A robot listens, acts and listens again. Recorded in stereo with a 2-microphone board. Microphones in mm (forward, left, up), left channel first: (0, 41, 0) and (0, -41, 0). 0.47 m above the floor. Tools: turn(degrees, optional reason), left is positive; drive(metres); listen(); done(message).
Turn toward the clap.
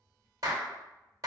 turn(degrees=-45, reason="The clap: about 45° right or 135° right.")
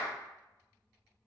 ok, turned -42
turn(degrees=-15, reason="So it is at 15° right.")
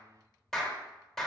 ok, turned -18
done("Found it: a clap, straight ahead.")